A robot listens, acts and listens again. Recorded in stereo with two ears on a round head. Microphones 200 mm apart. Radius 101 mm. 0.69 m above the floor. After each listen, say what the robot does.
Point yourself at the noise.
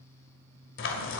Turn 60° left.
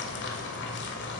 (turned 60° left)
Turn 55° left.
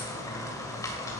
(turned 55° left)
Turn 15° left.
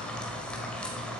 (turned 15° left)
Found it: frying, straight ahead, 2 to 4 m away.